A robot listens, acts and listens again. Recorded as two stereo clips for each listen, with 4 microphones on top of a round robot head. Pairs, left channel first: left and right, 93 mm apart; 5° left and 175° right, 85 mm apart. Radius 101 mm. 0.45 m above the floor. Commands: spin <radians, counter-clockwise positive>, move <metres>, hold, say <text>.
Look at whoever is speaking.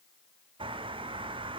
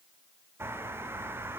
hold
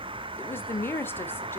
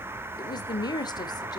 spin 0.44
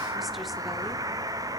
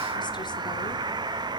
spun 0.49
hold
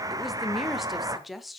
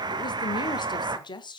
say Found it: a woman speaking, straight ahead.